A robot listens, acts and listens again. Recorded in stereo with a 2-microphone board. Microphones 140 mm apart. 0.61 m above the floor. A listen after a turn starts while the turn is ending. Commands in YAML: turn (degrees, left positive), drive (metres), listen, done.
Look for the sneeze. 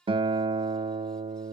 listen: true
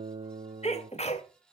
turn: 50
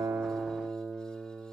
listen: true
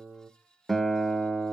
done: "I heard a sneeze, but can't make it out now. It was about straight ahead or 80° left."